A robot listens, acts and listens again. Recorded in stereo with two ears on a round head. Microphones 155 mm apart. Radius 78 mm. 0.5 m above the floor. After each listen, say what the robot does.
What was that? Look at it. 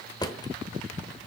Turn 20° left.
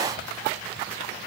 Keep listening.
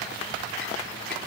Keep listening.
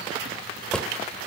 Found it: a drawer, straight ahead, 1 to 2 m away.